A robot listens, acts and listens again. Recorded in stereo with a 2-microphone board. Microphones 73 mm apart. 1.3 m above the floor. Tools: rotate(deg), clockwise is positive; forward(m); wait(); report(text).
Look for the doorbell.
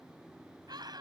wait()
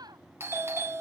rotate(35)
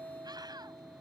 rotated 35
rotate(100)
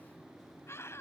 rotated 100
wait()
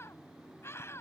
wait()
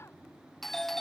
report("Found it: a doorbell, straight ahead.")